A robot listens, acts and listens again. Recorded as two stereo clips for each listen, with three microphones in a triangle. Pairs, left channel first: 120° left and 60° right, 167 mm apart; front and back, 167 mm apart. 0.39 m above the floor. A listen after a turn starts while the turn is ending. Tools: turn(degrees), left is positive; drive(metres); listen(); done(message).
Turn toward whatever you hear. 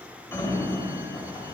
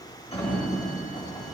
turn(degrees=50)
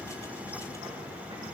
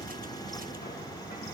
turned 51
done("Found it: a sliding door, straight ahead, 1 to 2 m away.")